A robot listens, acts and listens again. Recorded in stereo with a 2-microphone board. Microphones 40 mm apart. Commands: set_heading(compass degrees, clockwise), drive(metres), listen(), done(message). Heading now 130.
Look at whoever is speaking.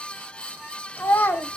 set_heading(60)
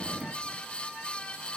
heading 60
listen()
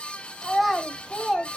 done("Found it: a child speaking, straight ahead, 1 to 2 m away.")